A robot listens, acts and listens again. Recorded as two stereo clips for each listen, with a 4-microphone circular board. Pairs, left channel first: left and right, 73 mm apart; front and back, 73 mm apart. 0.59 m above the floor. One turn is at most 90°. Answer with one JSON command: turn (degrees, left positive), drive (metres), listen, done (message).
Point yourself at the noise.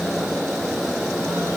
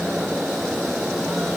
{"listen": true}
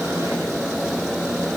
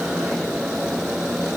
{"listen": true}
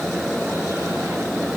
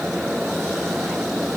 {"done": "I can't make out anything to turn to."}